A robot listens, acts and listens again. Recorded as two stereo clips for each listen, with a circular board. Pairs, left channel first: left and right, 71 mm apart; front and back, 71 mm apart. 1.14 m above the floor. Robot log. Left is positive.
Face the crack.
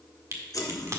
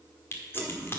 note: The crack: 50° right.
cmd yaw -50
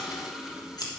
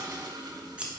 end: Facing where the crack came from. I can't hear it now.